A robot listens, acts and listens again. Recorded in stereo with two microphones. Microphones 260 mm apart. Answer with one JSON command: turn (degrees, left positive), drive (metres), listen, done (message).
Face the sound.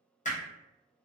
{"turn": 30}
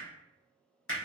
{"turn": 120}
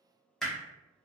{"done": "Found it: hammering, straight ahead, under 1 m away."}